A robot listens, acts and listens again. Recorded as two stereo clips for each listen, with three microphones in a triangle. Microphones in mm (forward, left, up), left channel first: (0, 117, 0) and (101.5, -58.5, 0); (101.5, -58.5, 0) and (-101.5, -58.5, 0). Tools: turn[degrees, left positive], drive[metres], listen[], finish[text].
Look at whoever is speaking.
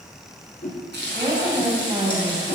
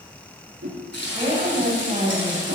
Thought: The woman speaking: 130° right.
Action: turn[-130]
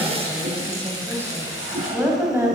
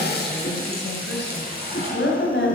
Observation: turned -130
Thought: The woman speaking is now 20° left.
Action: turn[20]
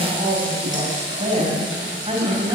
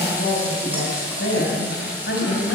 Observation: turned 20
Action: finish[Facing the woman speaking, 2 to 4 m away.]